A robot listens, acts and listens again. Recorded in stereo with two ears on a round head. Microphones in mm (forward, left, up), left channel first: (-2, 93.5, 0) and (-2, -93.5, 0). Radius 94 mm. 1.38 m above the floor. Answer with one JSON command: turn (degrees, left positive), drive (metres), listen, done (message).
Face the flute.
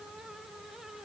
{"listen": true}
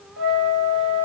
{"turn": -70}
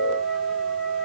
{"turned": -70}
{"done": "Found it: a flute, straight ahead, 1 to 2 m away."}